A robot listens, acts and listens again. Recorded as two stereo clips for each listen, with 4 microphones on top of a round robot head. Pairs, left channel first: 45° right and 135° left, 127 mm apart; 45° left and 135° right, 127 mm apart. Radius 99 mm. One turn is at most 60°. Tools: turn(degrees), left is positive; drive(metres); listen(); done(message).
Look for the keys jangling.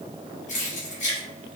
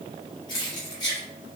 turn(degrees=-10)
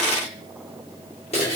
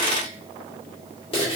done("Facing the keys jangling, 2 to 4 m away.")